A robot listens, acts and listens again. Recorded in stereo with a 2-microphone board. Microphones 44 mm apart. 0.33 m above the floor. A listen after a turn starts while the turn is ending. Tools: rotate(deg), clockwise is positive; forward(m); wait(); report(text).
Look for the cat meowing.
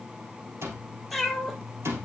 rotate(30)
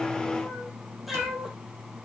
rotate(30)
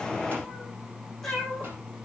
rotate(-30)
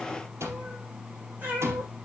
rotate(35)
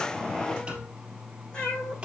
rotate(-20)
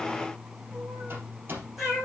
report("Facing the cat meowing.")